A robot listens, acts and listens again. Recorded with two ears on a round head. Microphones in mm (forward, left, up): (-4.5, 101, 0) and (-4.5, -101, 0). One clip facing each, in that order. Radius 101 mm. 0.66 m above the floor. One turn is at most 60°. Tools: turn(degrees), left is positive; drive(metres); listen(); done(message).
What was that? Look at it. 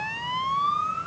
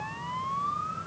listen()
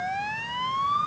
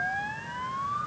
listen()
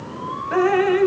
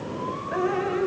turn(degrees=60)
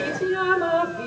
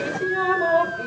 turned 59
turn(degrees=15)
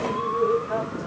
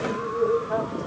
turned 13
done("Facing the dripping, 1 to 2 m away.")